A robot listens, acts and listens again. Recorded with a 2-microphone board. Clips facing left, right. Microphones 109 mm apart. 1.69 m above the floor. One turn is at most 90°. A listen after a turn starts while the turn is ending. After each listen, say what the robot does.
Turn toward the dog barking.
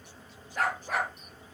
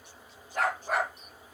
Turn 70° right.
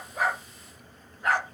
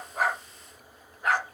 Turn 15° right.
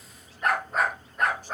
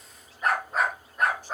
Found it: a dog barking, straight ahead.